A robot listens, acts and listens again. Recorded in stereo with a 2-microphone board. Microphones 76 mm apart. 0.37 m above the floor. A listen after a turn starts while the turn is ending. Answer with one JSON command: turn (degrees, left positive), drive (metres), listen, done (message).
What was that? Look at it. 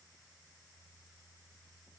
{"listen": true}
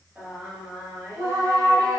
{"turn": -45}
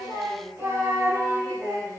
{"turn": -45}
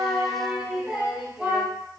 {"turn": -20}
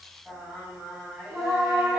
{"done": "Facing the singing."}